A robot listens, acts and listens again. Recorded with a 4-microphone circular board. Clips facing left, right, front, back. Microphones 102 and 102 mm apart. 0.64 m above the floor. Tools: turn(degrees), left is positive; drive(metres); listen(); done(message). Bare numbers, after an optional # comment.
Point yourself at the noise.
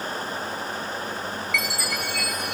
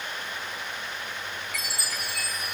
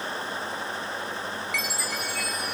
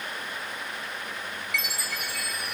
# The chime: 140° right.
turn(-140)
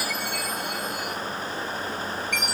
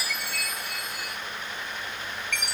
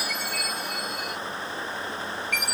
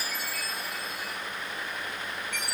# The chime is now 15° left.
turn(15)
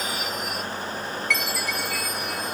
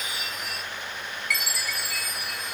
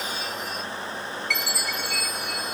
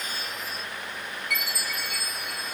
done("Facing the chime, 1 to 2 m away.")